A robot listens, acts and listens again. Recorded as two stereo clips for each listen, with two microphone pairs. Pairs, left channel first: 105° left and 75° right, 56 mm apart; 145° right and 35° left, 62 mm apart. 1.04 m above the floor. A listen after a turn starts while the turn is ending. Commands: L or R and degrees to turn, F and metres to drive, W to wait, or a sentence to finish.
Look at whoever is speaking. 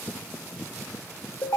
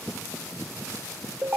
W
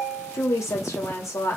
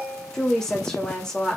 L135
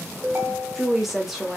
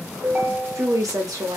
L10
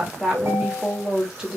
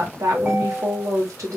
Facing the woman speaking, 1 to 2 m away.